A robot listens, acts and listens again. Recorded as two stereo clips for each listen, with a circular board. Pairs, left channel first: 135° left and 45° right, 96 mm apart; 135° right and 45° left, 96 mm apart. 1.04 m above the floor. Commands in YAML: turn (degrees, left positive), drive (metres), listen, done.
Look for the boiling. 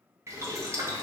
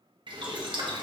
turn: 15
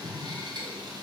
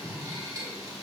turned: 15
done: "Found it: boiling, straight ahead, under 1 m away."